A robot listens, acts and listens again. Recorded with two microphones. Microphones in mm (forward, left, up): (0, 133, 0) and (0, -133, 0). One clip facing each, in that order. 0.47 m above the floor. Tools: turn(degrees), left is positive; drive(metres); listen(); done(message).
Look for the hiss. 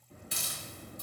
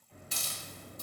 turn(degrees=65)
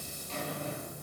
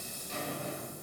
listen()
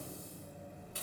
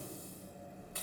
listen()
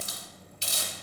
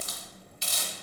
turn(degrees=35)
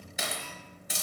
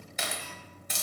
turn(degrees=10)
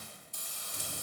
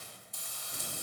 done("Found it: a hiss, straight ahead.")